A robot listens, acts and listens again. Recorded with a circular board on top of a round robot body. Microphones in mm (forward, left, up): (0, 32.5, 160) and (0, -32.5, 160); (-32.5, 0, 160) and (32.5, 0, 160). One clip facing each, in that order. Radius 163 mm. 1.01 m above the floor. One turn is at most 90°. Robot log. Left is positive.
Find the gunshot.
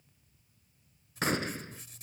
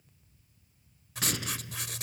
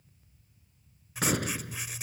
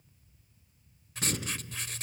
note: The gunshot: 145° left.
cmd yaw +90
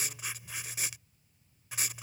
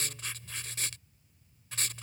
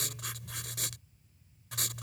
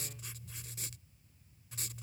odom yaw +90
note: Nothing new. It was at 55° left.
cmd yaw +55
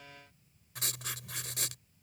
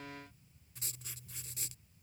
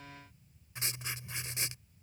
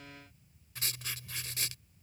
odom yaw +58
end: Facing where the gunshot came from. I can't hear it now.